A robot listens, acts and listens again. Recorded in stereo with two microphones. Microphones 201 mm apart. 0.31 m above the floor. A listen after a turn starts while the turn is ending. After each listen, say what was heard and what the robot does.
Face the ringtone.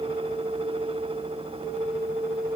Keep listening.
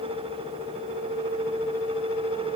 Keep listening.
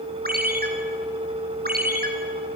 The ringtone: about 50° right or 130° right. Turn 50° right.
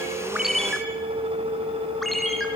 Facing the ringtone, 2 to 4 m away.